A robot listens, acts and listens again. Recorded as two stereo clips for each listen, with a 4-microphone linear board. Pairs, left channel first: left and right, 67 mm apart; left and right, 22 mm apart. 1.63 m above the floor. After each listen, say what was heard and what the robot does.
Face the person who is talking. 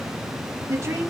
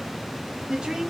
The woman speaking: about 40° right or 140° right. Turn 40° right.
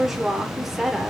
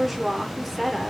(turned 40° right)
Found it: a woman speaking, straight ahead.